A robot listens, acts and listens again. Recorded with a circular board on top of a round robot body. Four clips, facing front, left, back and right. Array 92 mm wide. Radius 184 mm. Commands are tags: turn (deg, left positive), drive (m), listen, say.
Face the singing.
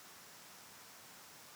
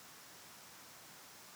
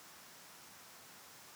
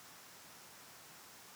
<listen/>
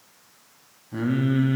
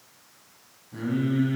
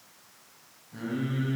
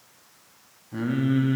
<turn deg="-35"/>
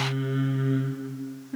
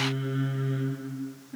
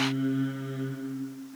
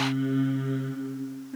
<turn deg="-10"/>
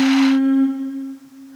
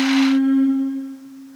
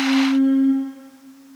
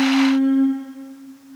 <say>Facing the singing.</say>